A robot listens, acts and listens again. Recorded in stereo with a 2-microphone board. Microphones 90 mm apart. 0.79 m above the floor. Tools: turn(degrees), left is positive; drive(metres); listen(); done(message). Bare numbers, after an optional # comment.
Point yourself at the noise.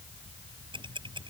# The ticking: about 70° right or 110° right.
turn(-70)
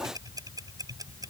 # So it is at 45° right.
turn(-45)
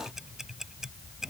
done("Found it: ticking, straight ahead.")